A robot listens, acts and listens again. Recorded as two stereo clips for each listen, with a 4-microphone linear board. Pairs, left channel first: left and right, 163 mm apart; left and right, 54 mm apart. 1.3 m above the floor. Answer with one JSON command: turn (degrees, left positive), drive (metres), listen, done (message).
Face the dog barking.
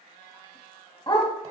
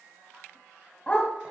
{"turn": 30}
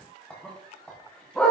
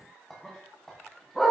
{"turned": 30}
{"done": "Facing the dog barking, 2 to 4 m away."}